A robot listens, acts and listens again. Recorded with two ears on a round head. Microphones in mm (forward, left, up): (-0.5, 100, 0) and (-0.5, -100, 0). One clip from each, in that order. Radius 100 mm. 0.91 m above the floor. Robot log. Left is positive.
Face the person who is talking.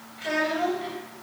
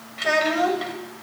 note: The child speaking: about 50° right or 130° right.
cmd yaw -50
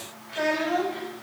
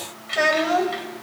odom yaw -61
note: So it is at 70° right.
cmd yaw -70
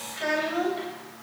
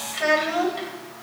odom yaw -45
note: The child speaking is now 25° right.
cmd yaw -25
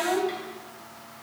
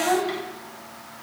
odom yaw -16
note: The child speaking is now 10° right.
cmd yaw -10
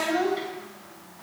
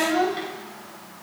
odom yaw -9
end: Found it: a child speaking, straight ahead, 2 to 4 m away.